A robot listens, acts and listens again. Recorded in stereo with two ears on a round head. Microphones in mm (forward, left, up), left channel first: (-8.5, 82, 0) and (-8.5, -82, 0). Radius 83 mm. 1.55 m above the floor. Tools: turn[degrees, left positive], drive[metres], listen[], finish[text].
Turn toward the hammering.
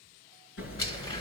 Action: turn[90]
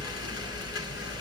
Action: finish[Facing the hammering, over 4 m away.]